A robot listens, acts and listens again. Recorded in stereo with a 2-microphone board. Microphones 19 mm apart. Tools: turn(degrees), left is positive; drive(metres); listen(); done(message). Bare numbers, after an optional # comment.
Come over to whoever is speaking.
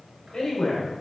# The man speaking: about 40° left or 140° left.
turn(40)
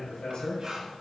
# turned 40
# So it is at 100° left.
turn(100)
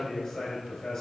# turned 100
# The man speaking is now 35° left.
turn(35)
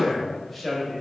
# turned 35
drive(1.0)
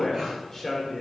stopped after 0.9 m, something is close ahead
# The man speaking is now 10° left.
turn(10)
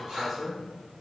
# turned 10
done("Arrived at the man speaking, straight ahead.")